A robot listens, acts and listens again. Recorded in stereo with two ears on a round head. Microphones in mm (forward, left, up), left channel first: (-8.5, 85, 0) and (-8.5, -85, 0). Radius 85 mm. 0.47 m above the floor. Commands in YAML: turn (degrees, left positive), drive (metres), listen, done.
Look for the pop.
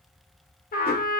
listen: true
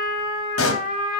turn: 90
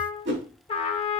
done: "I heard a pop from this way, but can't make it out now."